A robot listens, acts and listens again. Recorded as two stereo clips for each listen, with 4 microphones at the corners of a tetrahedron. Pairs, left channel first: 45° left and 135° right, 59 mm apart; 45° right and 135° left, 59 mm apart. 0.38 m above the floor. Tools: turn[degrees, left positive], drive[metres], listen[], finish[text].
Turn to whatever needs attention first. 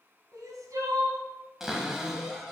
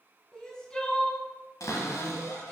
Thought: The crying: 125° right.
Action: turn[-125]
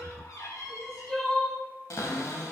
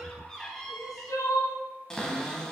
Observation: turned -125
Thought: The crying is now 40° right.
Action: turn[-40]
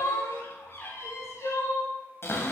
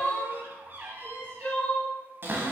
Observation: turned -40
Thought: The crying is now 20° left.
Action: turn[20]
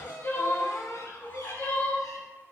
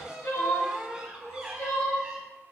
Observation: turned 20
Thought: The crying is now 10° right.
Action: turn[-10]
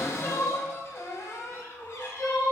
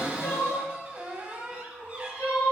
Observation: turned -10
Action: finish[Facing the crying, 1 to 2 m away.]